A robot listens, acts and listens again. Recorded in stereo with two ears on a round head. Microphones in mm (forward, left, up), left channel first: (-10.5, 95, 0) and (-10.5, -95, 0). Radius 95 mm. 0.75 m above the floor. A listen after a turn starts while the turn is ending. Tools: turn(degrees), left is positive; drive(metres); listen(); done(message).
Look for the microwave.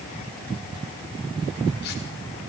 listen()
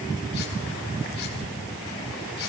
listen()
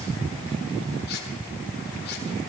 done("I can't make out a microwave.")